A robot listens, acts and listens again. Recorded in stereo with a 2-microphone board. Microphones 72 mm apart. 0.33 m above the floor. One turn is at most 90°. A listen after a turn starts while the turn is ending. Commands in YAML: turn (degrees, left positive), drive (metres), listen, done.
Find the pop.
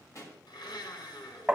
turn: 45
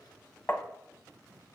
listen: true
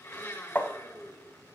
done: "I heard a pop, but can't make it out now. It was about straight ahead or 90° left."